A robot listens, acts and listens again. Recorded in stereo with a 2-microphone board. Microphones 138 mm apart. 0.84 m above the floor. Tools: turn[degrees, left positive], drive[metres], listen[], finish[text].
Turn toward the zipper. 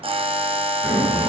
Action: turn[30]
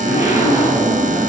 Thought: So it is at 25° right.
Action: turn[-25]
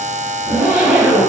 Thought: The zipper is now 10° right.
Action: turn[-10]
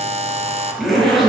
Action: finish[Found it: a zipper, straight ahead.]